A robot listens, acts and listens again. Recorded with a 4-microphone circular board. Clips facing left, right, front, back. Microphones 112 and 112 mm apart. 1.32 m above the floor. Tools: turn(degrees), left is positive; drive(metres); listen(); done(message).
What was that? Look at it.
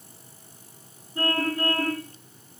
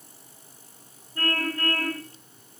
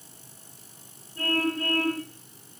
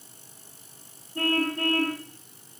turn(degrees=160)
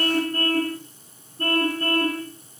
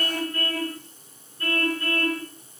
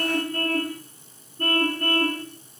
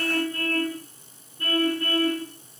turn(degrees=40)
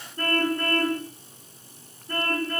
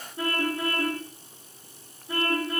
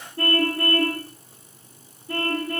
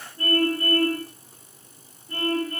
done("Facing the car horn.")